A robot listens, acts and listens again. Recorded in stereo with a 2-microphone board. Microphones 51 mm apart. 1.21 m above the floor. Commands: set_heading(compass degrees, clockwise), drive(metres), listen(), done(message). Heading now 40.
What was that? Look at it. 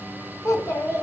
set_heading(325)
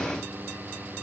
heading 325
listen()
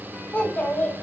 set_heading(295)
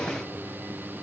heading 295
listen()
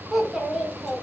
done("Facing the child speaking.")